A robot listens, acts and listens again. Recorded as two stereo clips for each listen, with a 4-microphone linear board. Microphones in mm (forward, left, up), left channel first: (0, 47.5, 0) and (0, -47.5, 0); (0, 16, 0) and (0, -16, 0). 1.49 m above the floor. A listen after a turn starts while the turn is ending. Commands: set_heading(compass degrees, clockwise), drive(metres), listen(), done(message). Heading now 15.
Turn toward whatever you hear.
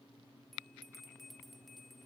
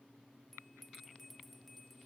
set_heading(345)
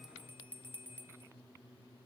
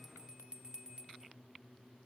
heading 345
set_heading(10)
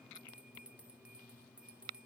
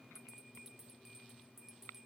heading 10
set_heading(25)
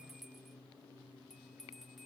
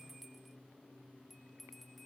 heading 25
done("Facing the bell.")